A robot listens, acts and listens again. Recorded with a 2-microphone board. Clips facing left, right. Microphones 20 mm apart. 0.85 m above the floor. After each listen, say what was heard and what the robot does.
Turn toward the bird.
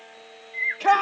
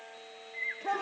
The bird: about 40° left or 140° left. Turn 40° left.
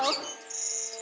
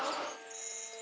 So it is at 105° left. Turn 105° left.
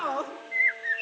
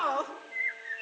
The bird is now 35° left. Turn 35° left.
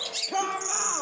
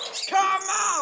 Found it: a bird, straight ahead, under 1 m away.